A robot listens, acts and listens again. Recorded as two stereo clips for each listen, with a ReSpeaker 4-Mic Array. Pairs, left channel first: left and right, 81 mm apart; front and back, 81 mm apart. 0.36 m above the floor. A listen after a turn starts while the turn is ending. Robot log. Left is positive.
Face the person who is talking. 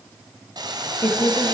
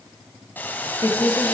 note: The woman speaking: 40° left.
cmd yaw +40
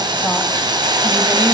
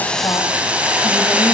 cmd idle
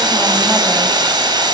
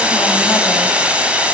cmd idle
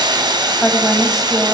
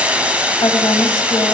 end: Found it: a woman speaking, straight ahead, 1 to 2 m away.